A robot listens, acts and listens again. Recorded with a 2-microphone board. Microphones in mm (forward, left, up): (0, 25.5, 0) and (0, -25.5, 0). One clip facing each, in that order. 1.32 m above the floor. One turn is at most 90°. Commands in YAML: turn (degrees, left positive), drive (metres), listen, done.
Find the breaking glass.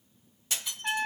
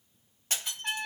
turn: -45
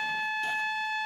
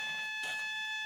listen: true
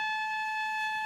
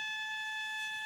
done: "I heard breaking glass, but can't make it out now. It was about straight ahead or 90° right."